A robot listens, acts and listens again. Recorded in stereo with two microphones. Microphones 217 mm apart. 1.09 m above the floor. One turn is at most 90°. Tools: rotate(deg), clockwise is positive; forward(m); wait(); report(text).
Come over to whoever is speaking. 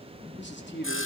rotate(-55)
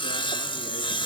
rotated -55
wait()
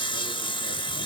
wait()
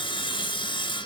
report("I heard a man speaking, but can't make it out now. It was about straight ahead or 70° left. I did not reach it.")